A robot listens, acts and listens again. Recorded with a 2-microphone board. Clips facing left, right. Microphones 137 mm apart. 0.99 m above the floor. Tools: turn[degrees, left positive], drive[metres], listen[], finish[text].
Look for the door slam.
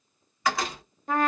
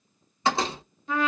Thought: The door slam: about 30° right or 150° right.
Action: turn[-30]
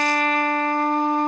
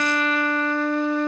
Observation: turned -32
Action: listen[]
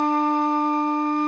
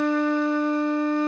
Action: finish[I heard a door slam, but can't make it out now. It was about 5° left or 120° right.]